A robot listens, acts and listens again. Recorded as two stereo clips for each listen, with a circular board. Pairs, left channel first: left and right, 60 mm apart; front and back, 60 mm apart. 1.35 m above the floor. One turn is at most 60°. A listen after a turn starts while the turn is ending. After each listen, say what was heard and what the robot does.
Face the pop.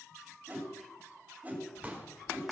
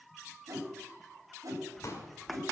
The pop: 25° right. Turn 25° right.
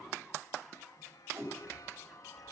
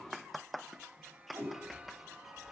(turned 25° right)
I heard a pop from this way, but can't make it out now.